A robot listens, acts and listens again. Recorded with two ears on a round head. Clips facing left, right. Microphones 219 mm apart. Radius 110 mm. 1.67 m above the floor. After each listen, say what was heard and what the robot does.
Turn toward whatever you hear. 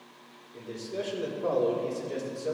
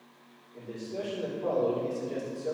Turn 30° left.
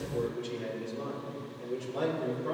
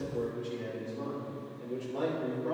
The man speaking: about 15° left or 165° left. Turn 15° left.
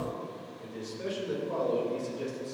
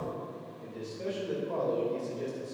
The man speaking: about 15° left or 165° left. Turn 15° left.
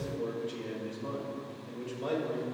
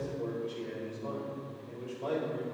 So it is at 145° left. Turn 145° left.
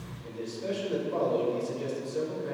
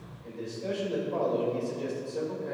The man speaking is now 25° left. Turn 25° left.
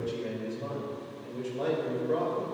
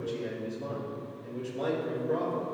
The man speaking is now 10° left. Turn 10° left.
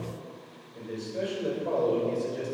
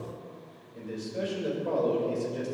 Found it: a man speaking, straight ahead, 2 to 4 m away.